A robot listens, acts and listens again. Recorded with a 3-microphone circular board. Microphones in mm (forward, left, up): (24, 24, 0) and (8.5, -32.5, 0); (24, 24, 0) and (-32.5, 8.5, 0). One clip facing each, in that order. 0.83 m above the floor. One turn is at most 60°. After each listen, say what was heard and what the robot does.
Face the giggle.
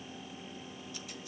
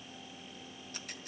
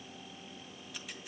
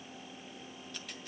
Keep listening.
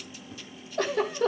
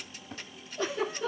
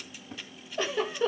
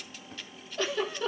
The giggle: 90° left. Turn 60° left.
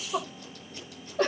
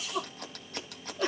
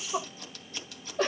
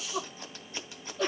The giggle is now 60° left. Turn 60° left.
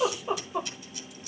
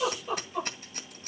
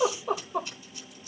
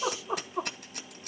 The giggle is now 15° left. Turn 15° left.
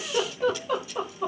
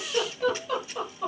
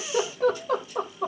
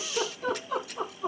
Found it: a giggle, straight ahead.